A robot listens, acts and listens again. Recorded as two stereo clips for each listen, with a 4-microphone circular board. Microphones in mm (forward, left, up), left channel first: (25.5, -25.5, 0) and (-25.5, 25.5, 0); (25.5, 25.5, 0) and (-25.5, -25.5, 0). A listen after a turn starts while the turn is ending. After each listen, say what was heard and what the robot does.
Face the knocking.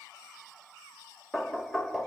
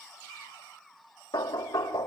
The knocking: 45° left. Turn 45° left.
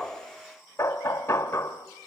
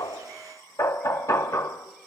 Facing the knocking, 1 to 2 m away.